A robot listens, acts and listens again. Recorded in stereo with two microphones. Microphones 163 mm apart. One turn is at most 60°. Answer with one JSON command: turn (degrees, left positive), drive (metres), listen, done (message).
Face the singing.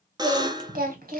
{"turn": -60}
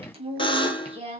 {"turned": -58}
{"turn": -35}
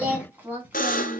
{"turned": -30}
{"turn": -10}
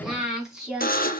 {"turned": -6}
{"done": "Found it: singing, straight ahead."}